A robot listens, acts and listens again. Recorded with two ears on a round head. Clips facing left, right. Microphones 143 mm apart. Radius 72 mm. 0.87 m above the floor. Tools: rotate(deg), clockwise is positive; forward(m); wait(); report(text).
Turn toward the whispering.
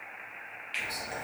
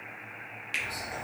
rotate(-30)
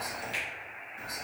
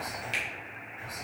rotate(-110)
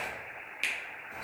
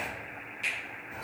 report("Found it: whispering, straight ahead.")